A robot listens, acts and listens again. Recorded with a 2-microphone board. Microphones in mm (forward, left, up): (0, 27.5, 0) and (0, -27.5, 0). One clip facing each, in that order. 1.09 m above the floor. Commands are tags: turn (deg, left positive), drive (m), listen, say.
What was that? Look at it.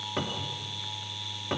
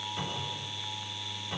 <turn deg="70"/>
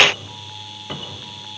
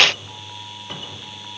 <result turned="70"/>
<turn deg="15"/>
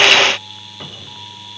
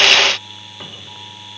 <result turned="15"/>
<say>Found it: a cupboard door, straight ahead.</say>